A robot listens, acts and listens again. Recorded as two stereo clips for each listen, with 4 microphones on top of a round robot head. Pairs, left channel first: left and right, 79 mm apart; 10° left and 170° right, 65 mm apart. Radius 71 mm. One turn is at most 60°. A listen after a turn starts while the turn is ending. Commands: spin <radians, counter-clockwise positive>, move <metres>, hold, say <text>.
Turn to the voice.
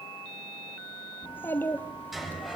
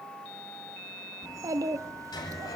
spin 1.05
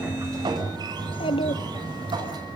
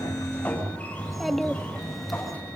spin 1.05
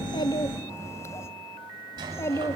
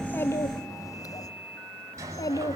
spin 0.61
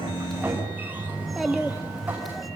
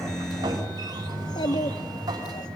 say Found it: a child speaking, straight ahead, 1 to 2 m away.